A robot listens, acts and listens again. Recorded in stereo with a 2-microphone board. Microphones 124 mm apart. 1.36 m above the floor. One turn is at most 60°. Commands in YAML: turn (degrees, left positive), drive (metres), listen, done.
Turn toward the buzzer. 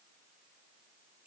listen: true
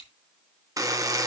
turn: -25
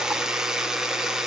done: "Facing the buzzer."